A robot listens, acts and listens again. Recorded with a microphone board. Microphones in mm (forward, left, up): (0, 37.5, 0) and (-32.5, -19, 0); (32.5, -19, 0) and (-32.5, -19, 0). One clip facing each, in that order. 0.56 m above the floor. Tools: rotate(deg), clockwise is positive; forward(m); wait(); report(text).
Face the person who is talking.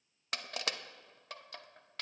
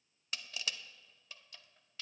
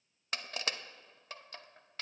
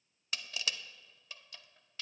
wait()
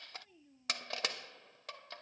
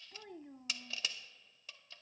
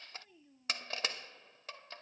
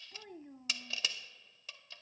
rotate(145)
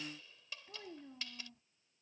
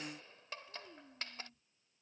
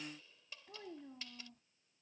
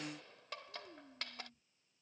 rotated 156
rotate(-10)
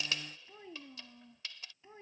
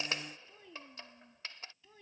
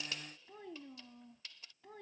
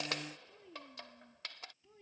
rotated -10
report("Found it: a child speaking, straight ahead.")